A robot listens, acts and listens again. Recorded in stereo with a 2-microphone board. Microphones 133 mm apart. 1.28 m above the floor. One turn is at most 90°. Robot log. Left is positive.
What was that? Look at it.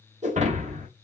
note: The breaking glass: about 60° right or 120° right.
cmd yaw -60
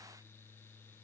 cmd idle
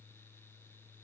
end: I heard breaking glass, but can't make it out now. It was about straight ahead or 60° right.